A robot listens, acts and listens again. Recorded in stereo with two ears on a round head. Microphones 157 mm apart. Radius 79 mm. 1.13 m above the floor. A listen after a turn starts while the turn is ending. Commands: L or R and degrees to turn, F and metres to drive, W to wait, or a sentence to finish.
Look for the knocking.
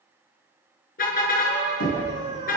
L90
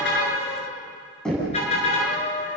Facing the knocking.